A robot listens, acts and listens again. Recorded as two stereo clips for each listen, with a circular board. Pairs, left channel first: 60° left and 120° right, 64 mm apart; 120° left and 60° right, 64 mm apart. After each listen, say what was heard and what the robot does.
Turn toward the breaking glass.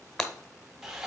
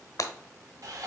The breaking glass: 135° left. Turn 135° left.
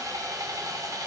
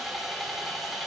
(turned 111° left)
Nothing new. It was at 25° left. Turn 25° left.
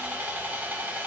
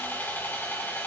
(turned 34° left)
Nothing new. It was at 10° right. Turn 10° right.
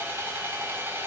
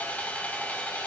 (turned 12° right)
Facing where the breaking glass came from. I can't hear it now.